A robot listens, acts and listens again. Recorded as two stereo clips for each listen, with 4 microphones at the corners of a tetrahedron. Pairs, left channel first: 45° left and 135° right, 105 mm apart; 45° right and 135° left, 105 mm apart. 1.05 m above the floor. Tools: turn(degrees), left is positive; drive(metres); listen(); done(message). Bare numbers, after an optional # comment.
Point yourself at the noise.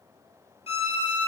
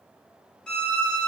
# The violin: 35° left.
turn(35)
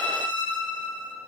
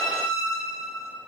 done("Found it: a violin, straight ahead.")